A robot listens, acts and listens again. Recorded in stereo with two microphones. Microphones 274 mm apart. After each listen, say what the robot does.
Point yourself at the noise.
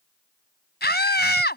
Turn 40° left.
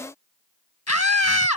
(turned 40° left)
Turn 100° left.
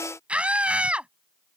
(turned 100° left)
Found it: a scream, straight ahead.